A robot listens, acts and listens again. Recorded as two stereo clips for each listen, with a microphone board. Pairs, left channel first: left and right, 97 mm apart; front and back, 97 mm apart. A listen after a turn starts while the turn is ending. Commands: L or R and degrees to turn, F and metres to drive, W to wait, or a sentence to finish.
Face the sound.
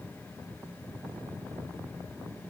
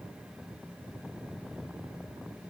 W
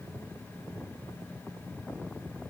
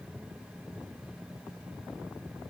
W
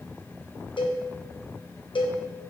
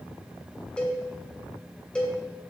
L80
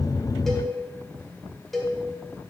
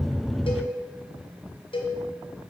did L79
Found it: a cowbell, straight ahead.